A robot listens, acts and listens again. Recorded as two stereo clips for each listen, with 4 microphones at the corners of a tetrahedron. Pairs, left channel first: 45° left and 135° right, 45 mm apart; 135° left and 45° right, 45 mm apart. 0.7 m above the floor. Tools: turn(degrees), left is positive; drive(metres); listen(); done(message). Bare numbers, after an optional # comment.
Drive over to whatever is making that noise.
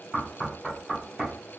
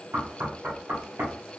# The knocking: 50° right.
turn(-50)
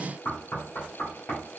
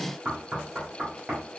# The knocking is now 15° left.
turn(15)
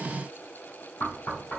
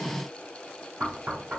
drive(1.0)
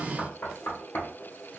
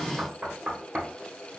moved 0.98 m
# The knocking is now 15° left.
turn(15)
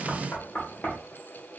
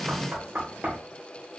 drive(1.0)
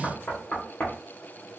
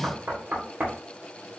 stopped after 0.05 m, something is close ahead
done("I am next to the knocking.")